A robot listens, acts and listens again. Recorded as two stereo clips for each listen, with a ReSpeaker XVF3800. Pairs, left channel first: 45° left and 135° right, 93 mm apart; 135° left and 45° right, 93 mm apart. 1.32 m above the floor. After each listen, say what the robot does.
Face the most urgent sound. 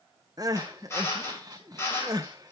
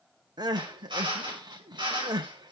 Turn 90° right.
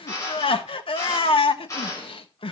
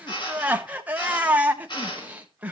Turn 30° left.
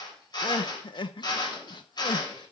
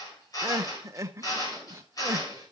Turn 15° left.
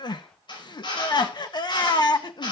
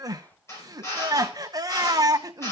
Facing the crying.